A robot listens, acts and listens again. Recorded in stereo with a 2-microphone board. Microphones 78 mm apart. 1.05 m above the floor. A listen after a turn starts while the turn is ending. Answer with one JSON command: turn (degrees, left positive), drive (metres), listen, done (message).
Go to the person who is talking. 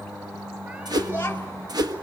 {"turn": 25}
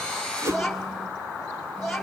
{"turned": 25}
{"drive": 1.0}
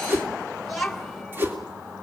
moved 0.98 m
{"drive": 1.0}
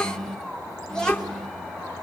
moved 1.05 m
{"turn": 10}
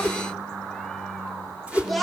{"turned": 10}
{"drive": 1.0}
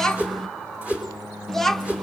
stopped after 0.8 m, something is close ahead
{"done": "I am next to the child speaking."}